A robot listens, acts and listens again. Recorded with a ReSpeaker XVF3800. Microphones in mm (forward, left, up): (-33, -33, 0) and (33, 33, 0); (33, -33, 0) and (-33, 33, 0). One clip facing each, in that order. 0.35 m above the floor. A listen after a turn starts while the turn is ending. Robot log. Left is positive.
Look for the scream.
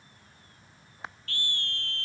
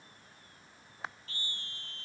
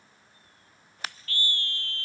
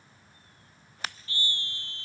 note: The scream: 155° right.
cmd yaw -155
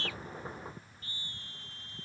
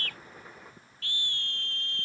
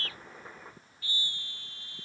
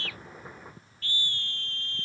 note: The scream is now 35° left.
cmd yaw +35
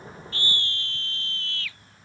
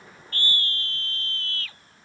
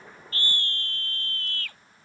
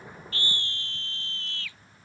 end: Found it: a scream, straight ahead.